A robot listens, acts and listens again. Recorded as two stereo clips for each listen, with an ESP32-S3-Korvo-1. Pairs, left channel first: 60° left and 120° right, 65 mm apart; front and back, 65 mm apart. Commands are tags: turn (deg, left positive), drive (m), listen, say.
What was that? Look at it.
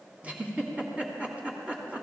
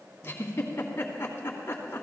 <turn deg="-50"/>
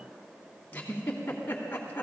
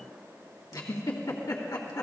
<say>Found it: a giggle, straight ahead, 2 to 4 m away.</say>